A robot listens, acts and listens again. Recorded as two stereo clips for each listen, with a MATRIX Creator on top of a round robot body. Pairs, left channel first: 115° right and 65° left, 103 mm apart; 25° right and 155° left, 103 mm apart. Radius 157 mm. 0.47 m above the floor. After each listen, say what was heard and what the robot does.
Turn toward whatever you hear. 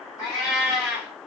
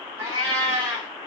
The cat meowing: 170° right. Turn 170° right.
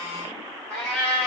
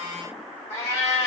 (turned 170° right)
Found it: a cat meowing, straight ahead, 2 to 4 m away.